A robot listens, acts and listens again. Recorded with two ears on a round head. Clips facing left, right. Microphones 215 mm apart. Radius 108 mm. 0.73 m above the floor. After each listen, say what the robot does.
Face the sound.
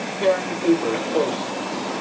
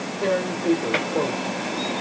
Turn 40° left.
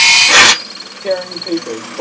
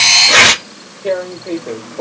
Turn 10° left.
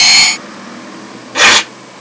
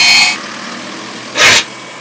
Found it: tearing paper, straight ahead, 1 to 2 m away.